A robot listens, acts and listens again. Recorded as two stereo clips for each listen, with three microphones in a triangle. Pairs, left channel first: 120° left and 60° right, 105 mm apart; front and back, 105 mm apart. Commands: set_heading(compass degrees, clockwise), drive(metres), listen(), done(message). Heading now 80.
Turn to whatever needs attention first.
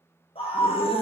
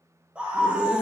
set_heading(340)
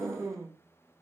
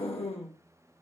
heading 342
done("Facing the scream, under 1 m away.")